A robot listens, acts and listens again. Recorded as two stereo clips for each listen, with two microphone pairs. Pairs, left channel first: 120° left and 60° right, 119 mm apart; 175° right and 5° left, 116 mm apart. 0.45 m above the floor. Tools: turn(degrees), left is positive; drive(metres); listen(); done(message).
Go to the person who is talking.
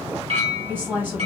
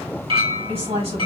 turn(degrees=10)
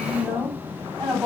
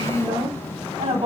drive(metres=1.0)
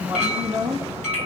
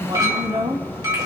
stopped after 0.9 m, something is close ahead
done("I am next to the woman speaking.")